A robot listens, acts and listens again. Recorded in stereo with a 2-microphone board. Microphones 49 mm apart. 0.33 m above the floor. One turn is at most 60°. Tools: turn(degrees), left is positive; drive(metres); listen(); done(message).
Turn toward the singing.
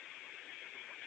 listen()
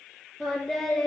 turn(degrees=30)
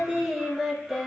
done("Facing the singing.")